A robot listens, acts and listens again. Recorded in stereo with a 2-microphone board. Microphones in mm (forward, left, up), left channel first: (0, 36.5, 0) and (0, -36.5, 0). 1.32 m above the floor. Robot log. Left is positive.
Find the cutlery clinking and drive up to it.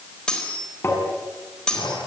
cmd yaw +30
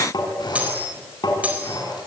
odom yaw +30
note: So it is at 15° right.
cmd yaw -15
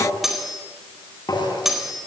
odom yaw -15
cmd fwd 1.0
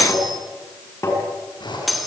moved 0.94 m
cmd fwd 1.0
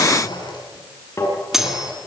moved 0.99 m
cmd fwd 1.0
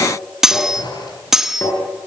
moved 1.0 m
cmd fwd 1.0
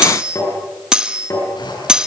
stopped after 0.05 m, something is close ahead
note: The cutlery clinking is now 10° right.
cmd yaw -10
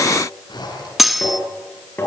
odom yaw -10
end: I am next to the cutlery clinking.